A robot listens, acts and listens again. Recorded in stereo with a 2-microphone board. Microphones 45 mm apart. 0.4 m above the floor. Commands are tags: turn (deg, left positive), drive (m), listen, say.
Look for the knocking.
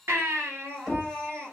<turn deg="30"/>
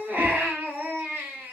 <listen/>
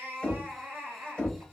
<turn deg="150"/>
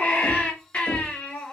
<turn deg="70"/>
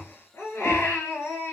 <listen/>
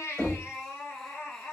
<turn deg="15"/>
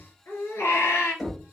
<say>Facing the knocking.</say>